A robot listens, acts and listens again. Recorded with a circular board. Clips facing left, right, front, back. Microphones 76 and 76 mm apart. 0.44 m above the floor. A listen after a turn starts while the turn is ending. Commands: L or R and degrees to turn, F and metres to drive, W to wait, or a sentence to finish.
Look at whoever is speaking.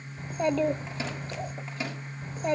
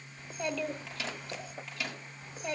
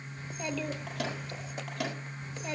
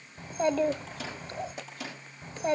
L135
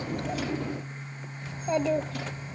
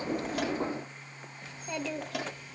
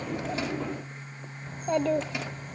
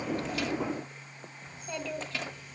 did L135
L35
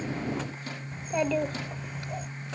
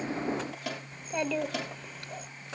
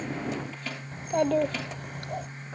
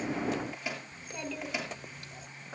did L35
Facing the child speaking, under 1 m away.